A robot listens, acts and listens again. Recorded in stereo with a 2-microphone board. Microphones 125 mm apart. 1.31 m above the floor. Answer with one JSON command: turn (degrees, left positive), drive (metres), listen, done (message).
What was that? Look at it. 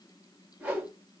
{"turn": -30}
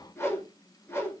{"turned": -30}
{"turn": 20}
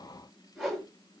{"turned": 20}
{"done": "Facing the whoosh."}